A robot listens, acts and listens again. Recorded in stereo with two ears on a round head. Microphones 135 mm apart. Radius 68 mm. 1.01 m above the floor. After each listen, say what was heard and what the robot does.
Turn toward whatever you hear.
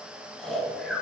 Turn 30° left.
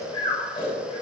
So it is at 145° left. Turn 145° left.
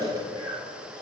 The snoring is now 30° right. Turn 30° right.
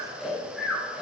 Facing the snoring.